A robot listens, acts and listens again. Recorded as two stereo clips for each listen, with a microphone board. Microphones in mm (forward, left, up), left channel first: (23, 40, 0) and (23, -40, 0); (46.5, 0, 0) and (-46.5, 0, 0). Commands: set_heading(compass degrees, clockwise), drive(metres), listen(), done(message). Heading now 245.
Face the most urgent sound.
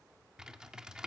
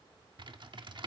listen()
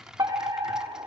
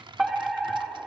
set_heading(340)
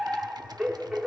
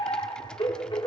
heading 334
done("Facing the fire alarm.")